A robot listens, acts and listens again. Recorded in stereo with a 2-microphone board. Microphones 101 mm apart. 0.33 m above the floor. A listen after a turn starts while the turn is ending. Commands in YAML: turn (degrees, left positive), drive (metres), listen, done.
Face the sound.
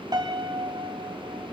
turn: -40
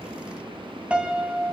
turn: -15
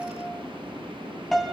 done: "Found it: a piano, straight ahead, 2 to 4 m away."